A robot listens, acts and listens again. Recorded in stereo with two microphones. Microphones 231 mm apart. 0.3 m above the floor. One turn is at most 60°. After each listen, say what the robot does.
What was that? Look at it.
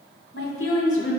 Turn 60° left.
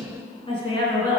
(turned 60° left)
Turn 20° left.
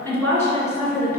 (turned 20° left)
Turn 10° left.
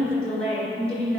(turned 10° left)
Facing the woman speaking, over 4 m away.